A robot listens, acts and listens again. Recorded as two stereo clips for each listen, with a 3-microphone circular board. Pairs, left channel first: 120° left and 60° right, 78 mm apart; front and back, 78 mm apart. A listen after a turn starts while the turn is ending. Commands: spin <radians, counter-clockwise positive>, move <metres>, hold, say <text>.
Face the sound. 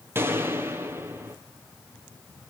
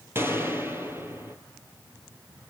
spin -2.09
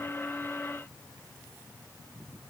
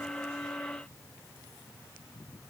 say Facing where the gunshot came from. I can't hear it now.